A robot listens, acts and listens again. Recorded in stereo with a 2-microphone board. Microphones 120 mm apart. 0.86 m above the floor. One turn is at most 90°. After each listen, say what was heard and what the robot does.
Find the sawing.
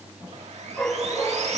The sawing: about 65° right or 115° right. Turn 65° right.
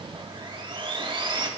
So it is at 45° right. Turn 45° right.
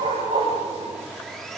Facing the sawing.